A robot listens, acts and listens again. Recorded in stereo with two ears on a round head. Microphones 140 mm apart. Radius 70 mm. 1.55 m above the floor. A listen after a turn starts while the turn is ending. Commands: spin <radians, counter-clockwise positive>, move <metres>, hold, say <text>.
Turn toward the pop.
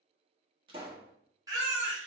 spin -0.52
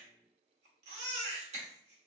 hold
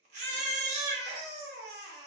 say I heard a pop, but can't make it out now. It was about straight ahead or 120° right.